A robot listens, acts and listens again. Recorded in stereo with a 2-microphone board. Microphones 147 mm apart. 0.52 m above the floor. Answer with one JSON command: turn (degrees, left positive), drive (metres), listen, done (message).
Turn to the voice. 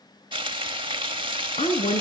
{"turn": 50}
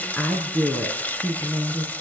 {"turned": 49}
{"turn": 10}
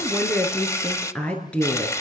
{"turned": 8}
{"turn": 10}
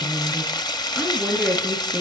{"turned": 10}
{"done": "Facing the woman speaking, over 4 m away."}